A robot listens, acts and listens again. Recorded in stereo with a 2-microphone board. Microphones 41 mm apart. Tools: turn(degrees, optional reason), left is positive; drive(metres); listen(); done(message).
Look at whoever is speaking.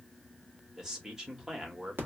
turn(degrees=-30)
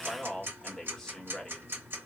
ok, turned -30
turn(degrees=10, reason="So it is at 10° left.")
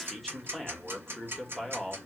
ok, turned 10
done("Facing the man speaking, 1 to 2 m away.")